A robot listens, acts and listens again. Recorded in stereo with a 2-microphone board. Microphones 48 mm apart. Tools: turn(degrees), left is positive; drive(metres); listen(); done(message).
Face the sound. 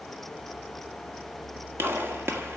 turn(degrees=-60)
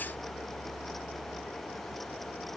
listen()
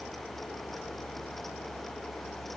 done("I heard a gunshot, but can't make it out now. It was about straight ahead or 60° right.")